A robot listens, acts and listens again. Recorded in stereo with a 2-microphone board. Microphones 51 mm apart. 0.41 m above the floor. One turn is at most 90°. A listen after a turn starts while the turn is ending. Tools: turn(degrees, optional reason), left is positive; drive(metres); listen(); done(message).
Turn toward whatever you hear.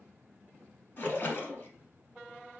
turn(degrees=40, reason="The splash: about 40° left or 140° left.")
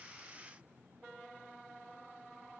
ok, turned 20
listen()
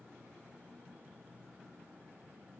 done("I heard a splash, but can't make it out now. It was about 20° left or 120° left.")